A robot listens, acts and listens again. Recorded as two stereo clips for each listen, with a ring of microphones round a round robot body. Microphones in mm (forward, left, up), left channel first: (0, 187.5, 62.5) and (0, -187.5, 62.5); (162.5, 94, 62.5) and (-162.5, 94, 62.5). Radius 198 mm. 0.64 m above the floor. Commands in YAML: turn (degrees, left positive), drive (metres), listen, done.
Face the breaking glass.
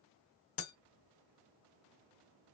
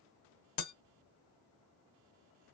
turn: 35
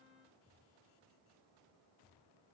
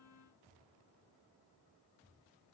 done: "I heard breaking glass from this way, but can't make it out now."